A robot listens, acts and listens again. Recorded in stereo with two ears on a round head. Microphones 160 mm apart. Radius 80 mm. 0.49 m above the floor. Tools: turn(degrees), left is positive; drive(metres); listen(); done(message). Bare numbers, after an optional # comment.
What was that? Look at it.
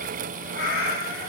# The cat meowing: about 70° left or 110° left.
turn(70)
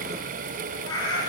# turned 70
# So it is at 20° left.
turn(20)
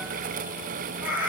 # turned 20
# The cat meowing is now 10° right.
turn(-10)
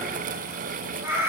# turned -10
# The cat meowing is now 15° right.
turn(-15)
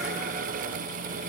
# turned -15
listen()
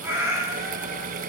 # The cat meowing is now 10° right.
turn(-10)
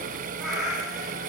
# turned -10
done("Found it: a cat meowing, straight ahead.")